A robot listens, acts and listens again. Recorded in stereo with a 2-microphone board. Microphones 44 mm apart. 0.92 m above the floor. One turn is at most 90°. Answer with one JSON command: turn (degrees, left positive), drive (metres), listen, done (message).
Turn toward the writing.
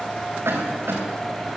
{"listen": true}
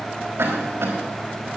{"listen": true}
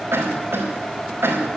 {"done": "I can't make out writing to turn to."}